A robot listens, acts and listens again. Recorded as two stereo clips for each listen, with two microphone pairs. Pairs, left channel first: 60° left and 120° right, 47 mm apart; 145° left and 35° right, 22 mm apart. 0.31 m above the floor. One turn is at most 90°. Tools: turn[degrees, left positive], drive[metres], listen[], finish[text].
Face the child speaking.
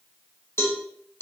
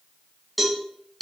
Action: listen[]
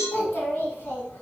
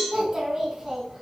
Thought: The child speaking: 45° left.
Action: turn[45]
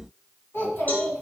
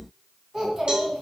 Thought: The child speaking is now 40° left.
Action: turn[40]
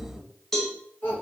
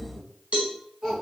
Thought: The child speaking is now 25° left.
Action: turn[25]
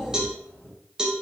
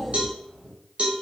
Action: finish[Found it: a child speaking, straight ahead.]